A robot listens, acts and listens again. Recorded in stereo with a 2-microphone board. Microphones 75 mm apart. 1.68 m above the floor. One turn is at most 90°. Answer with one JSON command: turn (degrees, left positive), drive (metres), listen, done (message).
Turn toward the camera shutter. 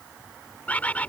{"listen": true}
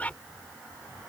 {"listen": true}
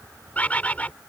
{"done": "I can't make out a camera shutter to turn to."}